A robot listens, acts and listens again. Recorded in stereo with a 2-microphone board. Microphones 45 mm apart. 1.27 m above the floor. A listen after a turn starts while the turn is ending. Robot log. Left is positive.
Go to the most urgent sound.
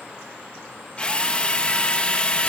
cmd idle
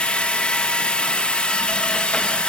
cmd idle
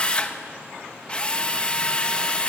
end: I can't make out anything urgent, only a drill.